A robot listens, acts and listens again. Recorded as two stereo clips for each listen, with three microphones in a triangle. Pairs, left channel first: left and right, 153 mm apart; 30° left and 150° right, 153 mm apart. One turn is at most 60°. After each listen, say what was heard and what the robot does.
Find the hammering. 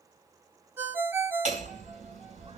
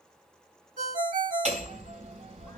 The hammering: 115° right. Turn 60° right.
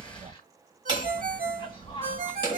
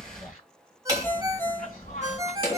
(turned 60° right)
The hammering is now 40° right. Turn 40° right.
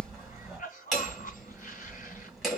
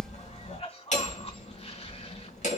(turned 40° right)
Found it: hammering, straight ahead.